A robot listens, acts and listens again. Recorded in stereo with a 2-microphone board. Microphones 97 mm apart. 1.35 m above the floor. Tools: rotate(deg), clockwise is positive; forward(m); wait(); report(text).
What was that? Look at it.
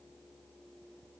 wait()
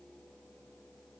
wait()
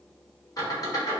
rotate(-40)
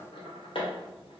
rotate(-100)
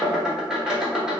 rotate(10)
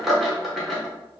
report("Facing the squeak, under 1 m away.")